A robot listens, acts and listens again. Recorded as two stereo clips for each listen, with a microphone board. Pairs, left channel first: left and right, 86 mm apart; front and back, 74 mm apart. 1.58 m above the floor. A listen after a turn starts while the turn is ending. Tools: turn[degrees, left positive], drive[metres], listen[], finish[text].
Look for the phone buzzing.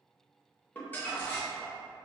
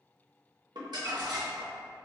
Action: listen[]
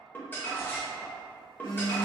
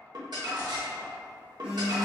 Thought: The phone buzzing: 110° left.
Action: turn[110]
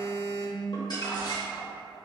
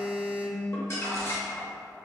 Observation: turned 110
Action: finish[Found it: a phone buzzing, straight ahead, 1 to 2 m away.]